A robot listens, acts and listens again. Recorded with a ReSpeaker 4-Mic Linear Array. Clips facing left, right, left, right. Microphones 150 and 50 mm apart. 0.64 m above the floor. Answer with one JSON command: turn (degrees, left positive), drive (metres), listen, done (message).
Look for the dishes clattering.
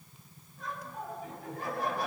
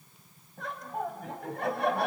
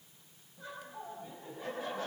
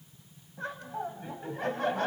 {"listen": true}
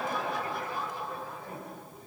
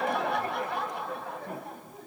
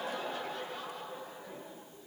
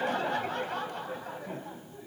{"listen": true}
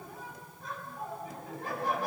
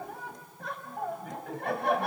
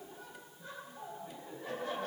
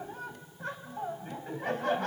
{"done": "I can't make out dishes clattering to turn to."}